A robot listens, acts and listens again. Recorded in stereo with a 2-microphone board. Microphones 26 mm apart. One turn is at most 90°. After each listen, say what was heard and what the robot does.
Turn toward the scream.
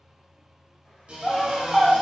Turn 30° left.
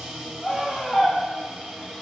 So it is at 150° left. Turn 90° left.
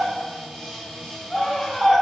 The scream is now 50° left. Turn 50° left.
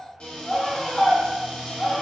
Facing the scream, 1 to 2 m away.